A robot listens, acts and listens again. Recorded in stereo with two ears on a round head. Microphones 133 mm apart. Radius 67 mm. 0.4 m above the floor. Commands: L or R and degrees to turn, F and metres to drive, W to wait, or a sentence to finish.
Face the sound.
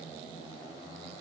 W
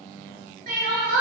R60
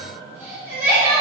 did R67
R20
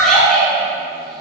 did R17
Facing the crying.